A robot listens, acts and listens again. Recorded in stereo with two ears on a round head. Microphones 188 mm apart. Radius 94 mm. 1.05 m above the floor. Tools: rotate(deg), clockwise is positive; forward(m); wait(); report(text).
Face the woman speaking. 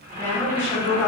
rotate(-30)
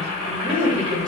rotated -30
rotate(20)
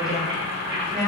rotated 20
report("Found it: a woman speaking, straight ahead, 1 to 2 m away.")